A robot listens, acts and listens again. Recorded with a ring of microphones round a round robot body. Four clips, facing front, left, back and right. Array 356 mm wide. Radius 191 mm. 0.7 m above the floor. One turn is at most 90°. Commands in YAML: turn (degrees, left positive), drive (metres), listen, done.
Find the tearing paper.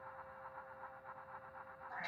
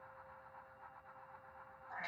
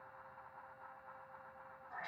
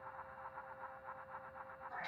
listen: true
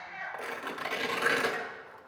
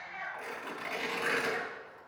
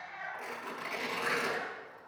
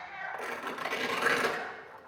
turn: -40
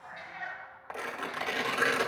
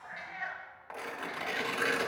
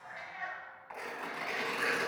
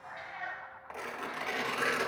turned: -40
done: "Facing the tearing paper, 1 to 2 m away."